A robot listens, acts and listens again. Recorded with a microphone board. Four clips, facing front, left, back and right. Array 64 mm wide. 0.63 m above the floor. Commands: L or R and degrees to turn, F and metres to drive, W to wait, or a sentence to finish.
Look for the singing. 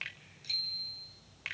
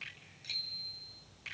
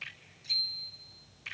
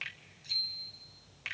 W
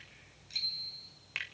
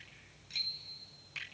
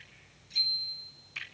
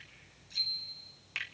W
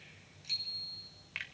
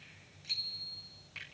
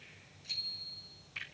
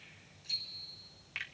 I can't make out singing, only a bicycle bell and a finger snap.